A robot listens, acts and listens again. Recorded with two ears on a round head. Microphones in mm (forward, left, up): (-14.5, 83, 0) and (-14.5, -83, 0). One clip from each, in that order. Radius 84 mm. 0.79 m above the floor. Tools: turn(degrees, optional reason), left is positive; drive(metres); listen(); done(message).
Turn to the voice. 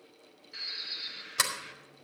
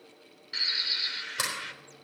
listen()
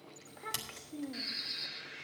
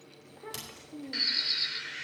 turn(degrees=30, reason="The child speaking: about 30° left or 150° left.")
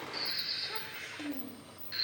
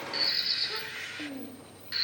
done("Found it: a child speaking, straight ahead, under 1 m away.")